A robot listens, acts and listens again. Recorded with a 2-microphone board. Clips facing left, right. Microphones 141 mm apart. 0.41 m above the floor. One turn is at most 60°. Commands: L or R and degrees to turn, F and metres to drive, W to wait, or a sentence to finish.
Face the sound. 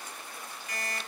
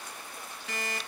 R60
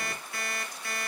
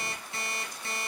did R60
R25
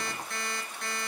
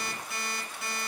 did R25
Facing the alarm clock, 1 to 2 m away.